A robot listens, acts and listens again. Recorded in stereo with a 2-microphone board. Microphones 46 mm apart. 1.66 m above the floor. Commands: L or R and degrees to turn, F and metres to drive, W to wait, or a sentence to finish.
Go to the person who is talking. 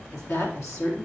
L90
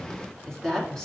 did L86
L10
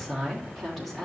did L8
F1.0
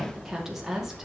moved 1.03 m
R10
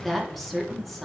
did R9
F1.0
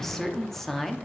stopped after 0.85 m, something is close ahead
I am next to the woman speaking.